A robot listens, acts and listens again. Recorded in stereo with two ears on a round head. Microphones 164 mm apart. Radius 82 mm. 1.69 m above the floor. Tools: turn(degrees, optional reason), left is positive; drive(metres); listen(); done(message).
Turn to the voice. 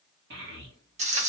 turn(degrees=-65, reason="The child speaking: about 65° right or 115° right.")
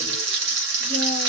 listen()
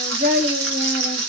turn(degrees=-45, reason="So it is at 45° right.")
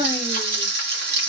listen()
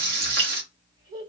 turn(degrees=-25, reason="The child speaking is now 25° right.")
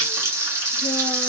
listen()
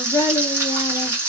turn(degrees=15, reason="The child speaking is now 15° left.")
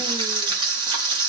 listen()
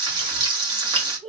done("Facing the child speaking, 1 to 2 m away.")